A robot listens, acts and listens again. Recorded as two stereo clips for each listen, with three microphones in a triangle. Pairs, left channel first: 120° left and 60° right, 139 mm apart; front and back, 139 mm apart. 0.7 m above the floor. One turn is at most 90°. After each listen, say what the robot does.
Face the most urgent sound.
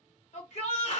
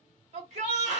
Turn 90° left.
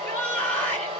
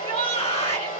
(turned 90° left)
Turn 40° left.
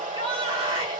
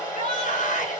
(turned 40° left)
Turn 15° right.
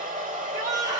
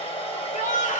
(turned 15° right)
Facing the shout, 1 to 2 m away.